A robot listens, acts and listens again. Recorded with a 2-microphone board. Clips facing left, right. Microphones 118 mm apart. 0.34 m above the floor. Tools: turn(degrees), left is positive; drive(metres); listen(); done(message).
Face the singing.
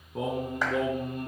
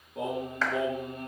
turn(degrees=60)
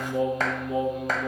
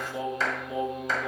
turn(degrees=40)
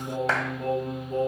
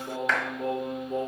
turn(degrees=-20)
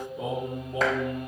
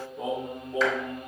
done("Facing the singing.")